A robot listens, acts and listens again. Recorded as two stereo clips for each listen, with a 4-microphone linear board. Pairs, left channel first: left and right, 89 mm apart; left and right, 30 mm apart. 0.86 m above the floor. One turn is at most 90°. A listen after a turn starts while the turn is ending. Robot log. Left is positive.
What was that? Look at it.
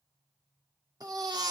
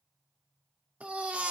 note: The baby crying: about 50° right or 130° right.
cmd yaw -50
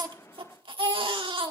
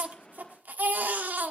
note: So it is at 80° right.
cmd yaw -80
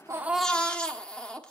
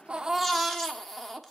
note: The baby crying is now 10° left.
cmd yaw +10
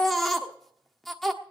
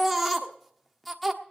end: Facing the baby crying, 1 to 2 m away.